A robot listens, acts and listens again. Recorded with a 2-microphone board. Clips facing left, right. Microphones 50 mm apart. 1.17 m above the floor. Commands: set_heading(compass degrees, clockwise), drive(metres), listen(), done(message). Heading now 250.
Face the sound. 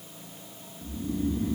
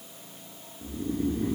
set_heading(295)
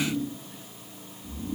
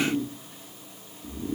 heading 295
set_heading(15)
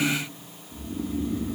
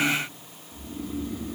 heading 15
done("Facing the snoring, 1 to 2 m away.")